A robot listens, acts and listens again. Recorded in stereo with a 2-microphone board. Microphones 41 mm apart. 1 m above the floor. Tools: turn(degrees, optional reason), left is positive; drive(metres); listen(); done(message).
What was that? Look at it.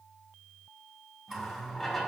turn(degrees=30)
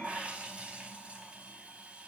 turn(degrees=-30, reason="So it is at 30° right.")
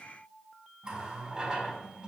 turn(degrees=-20, reason="The running tap is now 20° right.")
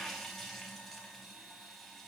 done("Found it: a running tap, straight ahead, over 4 m away.")